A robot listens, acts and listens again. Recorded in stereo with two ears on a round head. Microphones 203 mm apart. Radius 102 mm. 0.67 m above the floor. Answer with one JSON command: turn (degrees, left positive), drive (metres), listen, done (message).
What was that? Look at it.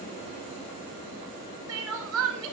{"turn": -70}
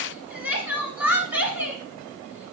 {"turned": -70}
{"done": "Facing the crying, 1 to 2 m away."}